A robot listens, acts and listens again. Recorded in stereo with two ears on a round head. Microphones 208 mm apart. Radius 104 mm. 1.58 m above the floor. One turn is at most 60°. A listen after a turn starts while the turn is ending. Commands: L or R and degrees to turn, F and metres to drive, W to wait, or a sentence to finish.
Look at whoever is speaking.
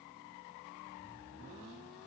W
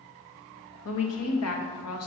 L60
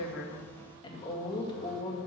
L25
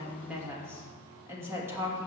R10
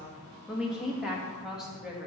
Found it: a woman speaking, straight ahead.